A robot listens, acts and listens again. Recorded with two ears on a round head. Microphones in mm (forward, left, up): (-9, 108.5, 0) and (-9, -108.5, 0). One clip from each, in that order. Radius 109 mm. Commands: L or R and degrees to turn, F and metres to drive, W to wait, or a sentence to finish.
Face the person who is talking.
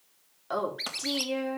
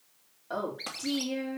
L55
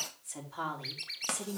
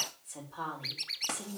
L70
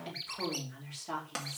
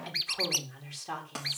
R15
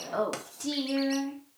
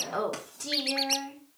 Found it: a woman speaking, straight ahead, 2 to 4 m away.